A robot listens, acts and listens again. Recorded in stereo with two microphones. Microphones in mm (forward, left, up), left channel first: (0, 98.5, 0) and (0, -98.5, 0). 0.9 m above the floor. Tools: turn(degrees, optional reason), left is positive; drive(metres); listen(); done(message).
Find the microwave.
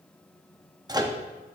turn(degrees=-20, reason="The microwave: about 20° right or 160° right.")
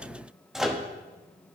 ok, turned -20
done("Facing the microwave, under 1 m away.")